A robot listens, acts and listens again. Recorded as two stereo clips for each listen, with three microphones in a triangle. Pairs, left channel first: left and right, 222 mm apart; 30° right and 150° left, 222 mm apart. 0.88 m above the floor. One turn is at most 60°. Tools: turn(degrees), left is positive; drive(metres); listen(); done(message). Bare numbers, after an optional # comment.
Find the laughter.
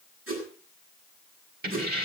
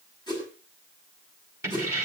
listen()
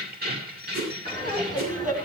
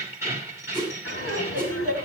# The laughter: 35° right.
turn(-35)
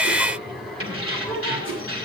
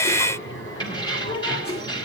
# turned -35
done("Found it: laughter, straight ahead, over 4 m away.")